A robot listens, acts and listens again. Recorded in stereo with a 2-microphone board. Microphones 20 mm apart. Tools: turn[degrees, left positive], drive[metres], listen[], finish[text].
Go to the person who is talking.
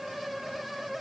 Action: listen[]
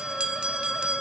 Action: listen[]
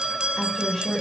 Action: turn[30]
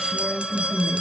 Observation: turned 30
Thought: So it is at 140° left.
Action: turn[140]
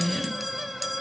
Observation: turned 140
Thought: The woman speaking is now 55° left.
Action: turn[55]
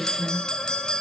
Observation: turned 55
Action: drive[1.0]
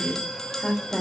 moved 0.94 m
Thought: The woman speaking is now 15° left.
Action: turn[15]
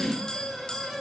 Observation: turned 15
Action: drive[1.0]
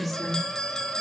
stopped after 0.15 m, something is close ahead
Thought: The woman speaking is now 10° left.
Action: turn[10]
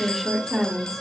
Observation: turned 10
Action: finish[I am next to the woman speaking.]